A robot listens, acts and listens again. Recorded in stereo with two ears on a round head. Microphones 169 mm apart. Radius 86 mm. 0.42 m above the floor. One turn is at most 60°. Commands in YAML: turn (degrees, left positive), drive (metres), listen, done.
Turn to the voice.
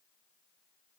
listen: true
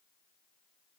listen: true
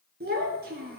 turn: -55
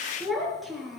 done: "Facing the child speaking."